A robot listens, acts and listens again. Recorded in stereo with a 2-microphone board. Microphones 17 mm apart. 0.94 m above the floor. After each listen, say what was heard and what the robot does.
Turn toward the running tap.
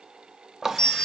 The running tap: about 25° right or 155° right. Turn 25° right.
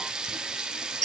So it is at 135° right. Turn 135° right.
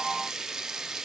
The running tap is now 40° right. Turn 40° right.
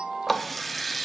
Found it: a running tap, straight ahead.